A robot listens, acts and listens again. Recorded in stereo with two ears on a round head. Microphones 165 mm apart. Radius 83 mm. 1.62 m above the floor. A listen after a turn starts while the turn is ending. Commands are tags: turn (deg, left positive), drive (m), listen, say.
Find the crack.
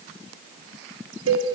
<listen/>
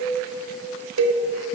<listen/>
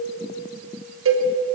<say>I can't make out a crack to turn to.</say>